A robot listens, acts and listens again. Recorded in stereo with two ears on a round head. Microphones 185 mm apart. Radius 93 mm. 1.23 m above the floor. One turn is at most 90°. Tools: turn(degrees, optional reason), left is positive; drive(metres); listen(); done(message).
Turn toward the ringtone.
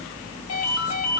turn(degrees=75, reason="The ringtone: about 75° left or 105° left.")
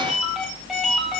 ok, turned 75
done("Found it: a ringtone, straight ahead.")